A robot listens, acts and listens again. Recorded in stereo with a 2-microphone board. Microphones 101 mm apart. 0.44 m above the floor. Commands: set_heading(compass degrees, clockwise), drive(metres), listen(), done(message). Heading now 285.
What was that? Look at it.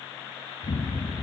set_heading(215)
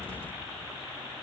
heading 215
listen()
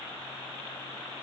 done("I heard an explosion, but can't make it out now. It was about straight ahead or 40° left.")